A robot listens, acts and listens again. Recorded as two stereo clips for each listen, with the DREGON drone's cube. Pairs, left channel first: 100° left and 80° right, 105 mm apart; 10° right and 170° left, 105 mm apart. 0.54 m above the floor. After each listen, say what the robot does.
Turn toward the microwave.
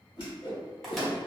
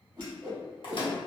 Turn 15° left.
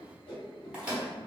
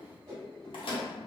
Facing the microwave.